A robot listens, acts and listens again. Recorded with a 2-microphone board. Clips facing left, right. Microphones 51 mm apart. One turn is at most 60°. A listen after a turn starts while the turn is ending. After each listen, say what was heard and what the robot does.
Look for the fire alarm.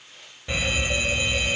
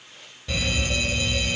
The fire alarm: about 20° left or 160° left. Turn 20° left.
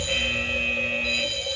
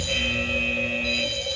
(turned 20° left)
Found it: a fire alarm, straight ahead.